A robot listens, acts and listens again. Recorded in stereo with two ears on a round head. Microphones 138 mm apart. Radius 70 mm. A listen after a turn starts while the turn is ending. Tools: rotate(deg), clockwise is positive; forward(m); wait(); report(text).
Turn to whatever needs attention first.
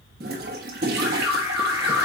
rotate(30)
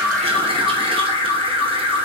rotate(-20)
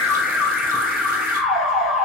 report("Facing the alarm.")